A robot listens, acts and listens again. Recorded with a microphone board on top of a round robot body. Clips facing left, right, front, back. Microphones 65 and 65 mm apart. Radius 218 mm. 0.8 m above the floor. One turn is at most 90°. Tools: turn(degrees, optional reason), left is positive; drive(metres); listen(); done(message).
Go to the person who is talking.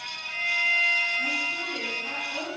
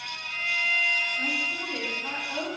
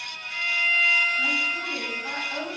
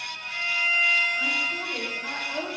turn(degrees=-90, reason="The woman speaking: 155° right.")
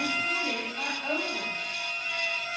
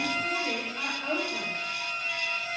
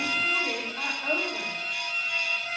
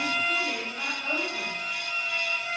turn(degrees=-40, reason="The woman speaking is now 40° right.")
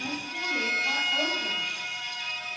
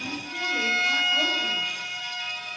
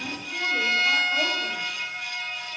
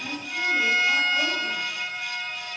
turn(degrees=-25, reason="The woman speaking is now 25° right.")
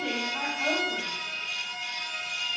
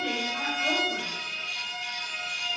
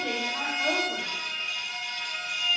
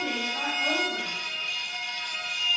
drive(metres=1.0)
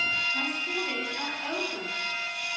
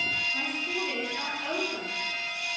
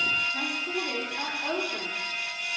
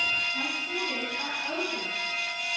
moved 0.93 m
drive(metres=1.0)
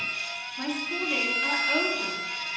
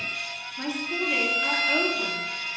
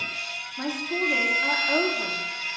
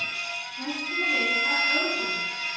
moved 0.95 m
drive(metres=1.0)
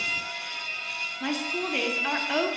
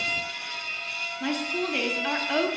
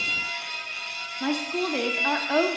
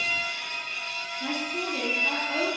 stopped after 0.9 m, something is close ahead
done("I am next to the woman speaking.")